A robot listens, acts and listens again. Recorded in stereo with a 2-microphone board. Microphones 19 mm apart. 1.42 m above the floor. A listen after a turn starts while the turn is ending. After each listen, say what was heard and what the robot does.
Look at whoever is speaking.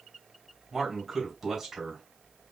The man speaking: about 15° right or 165° right. Turn 15° right.
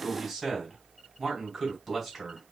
Facing the man speaking, 2 to 4 m away.